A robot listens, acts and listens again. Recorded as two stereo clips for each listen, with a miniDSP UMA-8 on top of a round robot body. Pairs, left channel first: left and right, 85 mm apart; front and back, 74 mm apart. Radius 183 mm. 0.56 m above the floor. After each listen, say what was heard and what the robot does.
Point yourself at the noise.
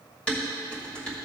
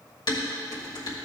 The dishes clattering: 10° left. Turn 10° left.
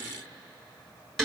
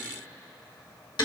Facing the dishes clattering.